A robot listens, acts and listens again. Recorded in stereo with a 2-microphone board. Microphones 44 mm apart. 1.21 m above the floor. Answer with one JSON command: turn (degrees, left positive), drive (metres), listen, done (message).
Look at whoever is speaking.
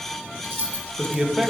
{"turn": -30}
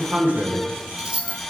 {"turn": -140}
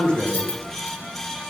{"turn": 20}
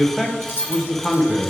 {"done": "Facing the man speaking."}